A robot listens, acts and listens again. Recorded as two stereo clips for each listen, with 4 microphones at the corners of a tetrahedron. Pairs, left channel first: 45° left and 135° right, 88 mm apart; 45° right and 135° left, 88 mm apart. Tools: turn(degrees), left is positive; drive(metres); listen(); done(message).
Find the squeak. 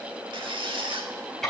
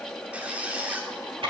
turn(degrees=-150)
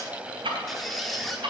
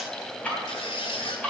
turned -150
turn(degrees=-45)
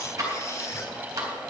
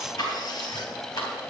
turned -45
listen()
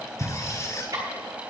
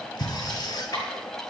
turn(degrees=-10)
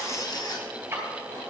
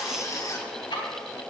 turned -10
done("Facing the squeak.")